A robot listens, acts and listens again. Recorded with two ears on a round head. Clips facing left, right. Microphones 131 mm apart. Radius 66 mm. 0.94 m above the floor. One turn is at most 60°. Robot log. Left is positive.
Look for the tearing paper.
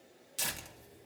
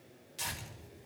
note: The tearing paper: about 60° left or 120° left.
cmd yaw +60
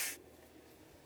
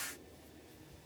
cmd idle
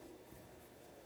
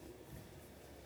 note: So it is at 10° left.
cmd yaw +10
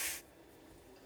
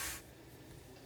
cmd idle
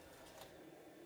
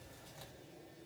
cmd idle
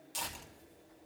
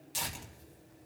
end: Found it: tearing paper, straight ahead, 2 to 4 m away.